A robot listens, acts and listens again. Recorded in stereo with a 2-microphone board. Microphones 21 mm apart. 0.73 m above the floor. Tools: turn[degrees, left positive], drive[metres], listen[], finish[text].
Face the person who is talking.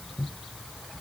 Action: listen[]
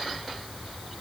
Action: listen[]
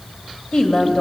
Thought: The woman speaking: about 35° left or 145° left.
Action: turn[35]
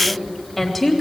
Action: finish[Facing the woman speaking.]